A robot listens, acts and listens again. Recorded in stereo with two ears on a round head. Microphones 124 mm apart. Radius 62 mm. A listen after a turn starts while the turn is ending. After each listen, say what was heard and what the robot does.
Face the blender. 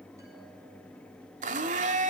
The blender: about 60° right or 120° right. Turn 60° right.
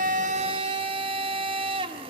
So it is at 45° right. Turn 45° right.
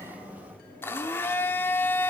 The blender is now 20° left. Turn 20° left.
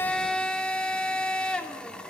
The blender is now 10° left. Turn 10° left.
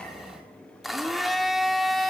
Facing the blender.